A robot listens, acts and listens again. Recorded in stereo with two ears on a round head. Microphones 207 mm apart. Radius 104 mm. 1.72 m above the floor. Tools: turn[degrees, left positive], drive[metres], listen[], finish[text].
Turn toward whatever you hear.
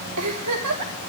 Action: turn[-90]
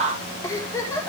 Thought: So it is at 15° left.
Action: turn[15]
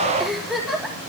Action: finish[Facing the giggle.]